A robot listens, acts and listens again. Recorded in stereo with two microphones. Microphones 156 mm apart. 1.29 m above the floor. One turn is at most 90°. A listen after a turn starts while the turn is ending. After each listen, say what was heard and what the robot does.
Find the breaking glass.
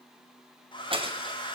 The breaking glass: about 35° right or 145° right. Turn 35° right.
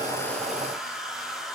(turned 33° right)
Keep listening.
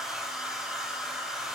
I heard breaking glass, but can't make it out now. It was about straight ahead or 110° right.